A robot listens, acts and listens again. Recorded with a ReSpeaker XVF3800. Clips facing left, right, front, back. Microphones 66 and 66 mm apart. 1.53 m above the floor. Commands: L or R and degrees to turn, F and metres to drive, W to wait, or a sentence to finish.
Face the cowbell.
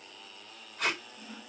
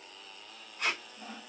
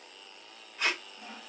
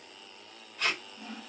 W
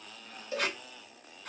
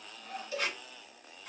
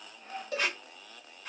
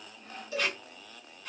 L30
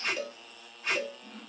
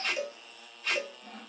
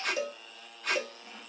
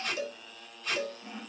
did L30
R10
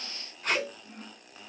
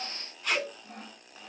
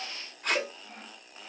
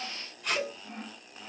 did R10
Facing the cowbell.